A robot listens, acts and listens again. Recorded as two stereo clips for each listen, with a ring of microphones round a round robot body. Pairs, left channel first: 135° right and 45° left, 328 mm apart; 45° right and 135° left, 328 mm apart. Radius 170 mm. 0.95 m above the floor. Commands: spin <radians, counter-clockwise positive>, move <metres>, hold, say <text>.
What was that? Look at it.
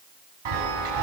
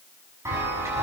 spin 0.96
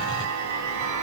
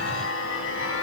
spin 0.17
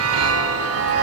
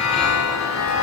say Found it: a chime, straight ahead, over 4 m away.